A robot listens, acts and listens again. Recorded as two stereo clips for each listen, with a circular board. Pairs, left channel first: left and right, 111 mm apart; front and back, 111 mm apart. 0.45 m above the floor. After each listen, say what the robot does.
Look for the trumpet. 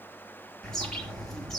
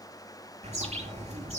Keep listening.
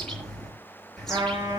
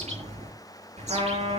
Turn 150° right.
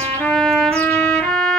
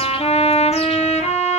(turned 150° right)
Facing the trumpet, over 4 m away.